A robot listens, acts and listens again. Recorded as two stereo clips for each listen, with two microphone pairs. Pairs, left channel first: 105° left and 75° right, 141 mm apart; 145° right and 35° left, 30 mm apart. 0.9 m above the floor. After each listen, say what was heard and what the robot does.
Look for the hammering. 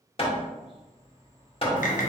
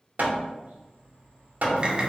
The hammering: 60° left. Turn 60° left.
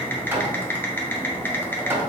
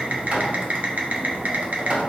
Found it: hammering, straight ahead.